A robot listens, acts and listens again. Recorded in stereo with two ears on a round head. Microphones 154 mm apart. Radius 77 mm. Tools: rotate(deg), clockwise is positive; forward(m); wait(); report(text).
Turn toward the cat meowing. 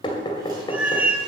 rotate(30)
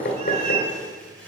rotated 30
rotate(140)
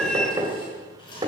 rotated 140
report("Found it: a cat meowing, straight ahead.")